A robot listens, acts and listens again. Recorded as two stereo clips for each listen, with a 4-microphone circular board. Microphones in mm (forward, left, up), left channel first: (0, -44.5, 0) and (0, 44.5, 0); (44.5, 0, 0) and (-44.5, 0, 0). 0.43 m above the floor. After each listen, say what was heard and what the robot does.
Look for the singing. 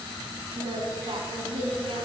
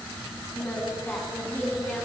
The singing: 70° left. Turn 70° left.
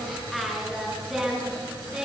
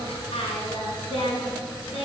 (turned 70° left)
Facing the singing.